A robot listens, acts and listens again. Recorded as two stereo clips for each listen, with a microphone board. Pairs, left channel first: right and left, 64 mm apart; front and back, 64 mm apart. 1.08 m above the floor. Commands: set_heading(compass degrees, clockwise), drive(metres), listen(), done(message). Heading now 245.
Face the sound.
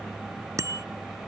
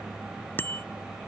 set_heading(185)
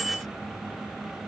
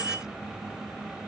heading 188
done("Facing the bicycle bell.")